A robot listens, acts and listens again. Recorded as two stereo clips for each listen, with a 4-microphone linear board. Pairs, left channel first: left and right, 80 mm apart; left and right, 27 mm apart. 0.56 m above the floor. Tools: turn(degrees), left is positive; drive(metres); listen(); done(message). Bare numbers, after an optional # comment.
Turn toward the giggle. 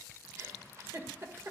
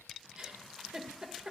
# The giggle: about 40° right or 140° right.
turn(-40)
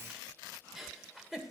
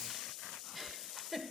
done("Found it: a giggle, straight ahead, 1 to 2 m away.")